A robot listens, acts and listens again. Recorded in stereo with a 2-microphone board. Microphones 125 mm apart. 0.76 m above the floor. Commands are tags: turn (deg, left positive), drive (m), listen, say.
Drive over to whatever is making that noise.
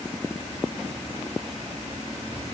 <listen/>
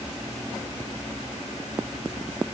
<listen/>
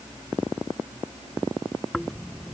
<turn deg="30"/>
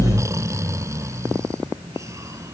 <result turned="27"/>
<turn deg="-25"/>
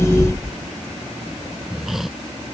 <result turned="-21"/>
<drive m="1.0"/>
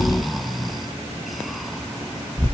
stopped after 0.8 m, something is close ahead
<say>Something is in my way. I am facing the snoring but have not reached it.</say>